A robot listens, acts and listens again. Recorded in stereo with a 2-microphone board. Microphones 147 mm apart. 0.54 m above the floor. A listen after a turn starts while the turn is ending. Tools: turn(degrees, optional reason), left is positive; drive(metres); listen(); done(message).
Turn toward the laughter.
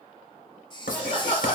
turn(degrees=45, reason="The laughter: about 45° left or 135° left.")
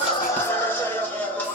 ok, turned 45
turn(degrees=10, reason="So it is at 10° left.")
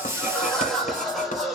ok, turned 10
done("Facing the laughter, 1 to 2 m away.")